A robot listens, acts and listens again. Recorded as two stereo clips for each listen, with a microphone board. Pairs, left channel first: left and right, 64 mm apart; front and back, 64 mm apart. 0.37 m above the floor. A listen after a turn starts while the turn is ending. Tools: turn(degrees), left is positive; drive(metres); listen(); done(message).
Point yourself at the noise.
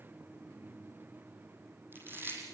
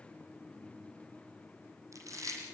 turn(degrees=-145)
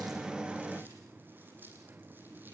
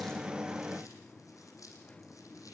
listen()
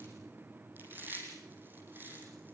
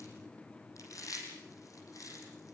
turn(degrees=-30)
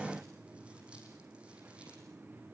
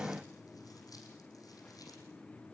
listen()
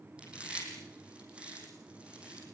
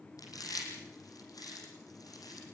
turn(degrees=-15)
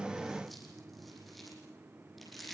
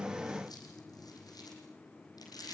done("Facing the chewing.")